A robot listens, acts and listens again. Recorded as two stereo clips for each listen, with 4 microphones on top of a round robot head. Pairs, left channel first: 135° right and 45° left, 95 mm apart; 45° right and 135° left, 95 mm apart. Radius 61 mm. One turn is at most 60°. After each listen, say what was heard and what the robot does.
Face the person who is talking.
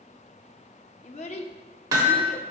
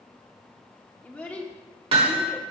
The child speaking: 120° right. Turn 60° right.
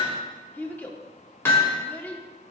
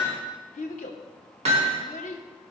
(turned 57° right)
The child speaking is now 60° right. Turn 60° right.
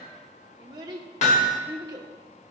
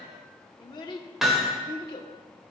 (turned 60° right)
Facing the child speaking, under 1 m away.